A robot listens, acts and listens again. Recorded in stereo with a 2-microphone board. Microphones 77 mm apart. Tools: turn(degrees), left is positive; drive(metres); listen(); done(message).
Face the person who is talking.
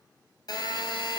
listen()
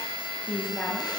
turn(degrees=30)
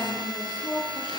turn(degrees=120)
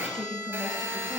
done("Facing the woman speaking.")